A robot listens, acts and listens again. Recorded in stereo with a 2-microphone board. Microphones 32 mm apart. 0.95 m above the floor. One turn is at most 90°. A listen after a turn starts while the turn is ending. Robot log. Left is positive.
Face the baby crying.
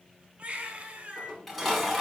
note: The baby crying: about 40° right or 140° right.
cmd yaw -40
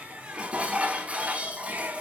cmd idle
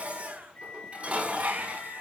note: So it is at 95° right.
cmd yaw -90
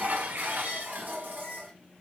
cmd idle
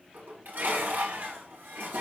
cmd idle
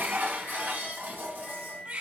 note: The baby crying is now 50° right.
cmd yaw -50
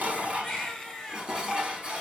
note: The baby crying is now 15° left.
cmd yaw +15
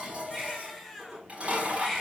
end: Facing the baby crying.